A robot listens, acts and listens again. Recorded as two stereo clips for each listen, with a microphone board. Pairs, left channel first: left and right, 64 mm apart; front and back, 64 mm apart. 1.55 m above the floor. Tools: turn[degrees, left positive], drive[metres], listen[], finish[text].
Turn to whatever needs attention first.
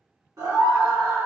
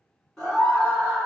Thought: The scream: 80° right.
Action: turn[-80]
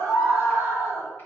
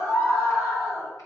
Thought: The scream is now 40° right.
Action: turn[-40]
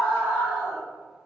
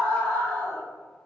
Action: finish[Facing the scream, 1 to 2 m away.]